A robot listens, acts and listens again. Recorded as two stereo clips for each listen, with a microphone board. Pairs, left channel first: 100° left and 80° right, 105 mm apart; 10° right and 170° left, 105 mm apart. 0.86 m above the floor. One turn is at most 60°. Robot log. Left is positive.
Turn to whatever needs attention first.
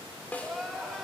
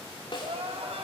note: The crying: 170° right.
cmd yaw -60
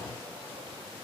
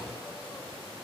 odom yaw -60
note: Nothing new. It was at 110° right.
cmd yaw -60
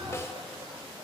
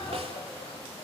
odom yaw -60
note: Nothing new. It was at 50° right.
cmd yaw -50
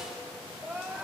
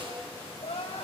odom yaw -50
end: Found it: crying, straight ahead.